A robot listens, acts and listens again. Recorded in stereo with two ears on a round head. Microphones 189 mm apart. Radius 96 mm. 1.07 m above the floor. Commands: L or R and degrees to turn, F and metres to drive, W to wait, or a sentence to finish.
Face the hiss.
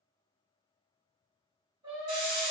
R90
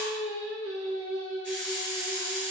Facing the hiss.